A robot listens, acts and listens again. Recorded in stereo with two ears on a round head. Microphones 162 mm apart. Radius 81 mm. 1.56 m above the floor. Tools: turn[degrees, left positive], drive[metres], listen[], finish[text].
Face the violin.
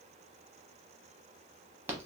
Action: listen[]
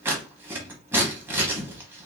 Action: listen[]
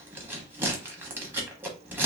Action: finish[I can't make out a violin to turn to.]